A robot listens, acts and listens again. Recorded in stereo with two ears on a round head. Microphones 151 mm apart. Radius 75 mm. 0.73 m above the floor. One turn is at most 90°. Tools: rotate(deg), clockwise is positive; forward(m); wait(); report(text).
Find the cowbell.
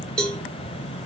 rotate(-30)
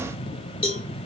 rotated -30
rotate(-90)
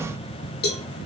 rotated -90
rotate(-70)
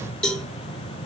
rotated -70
report("Facing the cowbell, 1 to 2 m away.")